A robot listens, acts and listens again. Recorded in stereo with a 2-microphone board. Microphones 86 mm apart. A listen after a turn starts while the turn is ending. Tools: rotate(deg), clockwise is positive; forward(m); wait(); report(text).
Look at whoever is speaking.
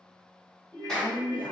rotate(-65)
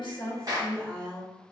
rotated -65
rotate(-15)
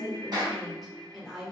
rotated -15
report("Facing the woman speaking, under 1 m away.")